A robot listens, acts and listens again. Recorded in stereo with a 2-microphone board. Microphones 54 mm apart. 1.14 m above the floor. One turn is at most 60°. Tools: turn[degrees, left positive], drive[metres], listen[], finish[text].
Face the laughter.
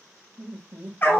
Thought: The laughter: about 55° right or 125° right.
Action: turn[-55]
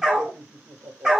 Thought: So it is at 65° right.
Action: turn[-60]
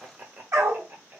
Thought: The laughter is now 45° right.
Action: turn[-45]
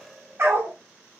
Thought: The laughter is now 10° right.
Action: turn[-10]
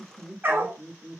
Thought: The laughter is now 15° right.
Action: turn[-15]
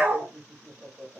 Action: finish[Found it: laughter, straight ahead.]